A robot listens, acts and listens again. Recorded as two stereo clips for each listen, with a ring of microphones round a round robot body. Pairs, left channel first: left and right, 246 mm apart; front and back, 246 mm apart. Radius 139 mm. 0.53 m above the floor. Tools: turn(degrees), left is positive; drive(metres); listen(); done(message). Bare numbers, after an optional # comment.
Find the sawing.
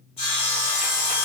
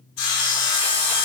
# The sawing: 25° left.
turn(25)
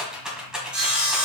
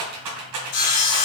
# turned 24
done("Found it: sawing, straight ahead, 1 to 2 m away.")